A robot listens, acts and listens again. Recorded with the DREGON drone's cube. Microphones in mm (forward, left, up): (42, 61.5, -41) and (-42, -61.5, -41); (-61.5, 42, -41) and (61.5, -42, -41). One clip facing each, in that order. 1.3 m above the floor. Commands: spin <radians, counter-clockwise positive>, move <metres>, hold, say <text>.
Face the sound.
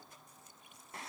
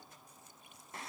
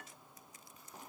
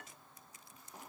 hold
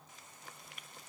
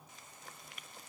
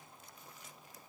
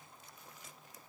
hold
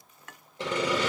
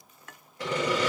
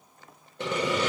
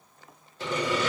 spin 2.09
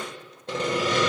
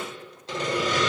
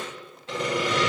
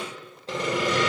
spin 0.35
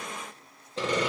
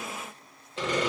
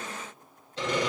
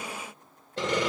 say Found it: sawing, straight ahead, 1 to 2 m away.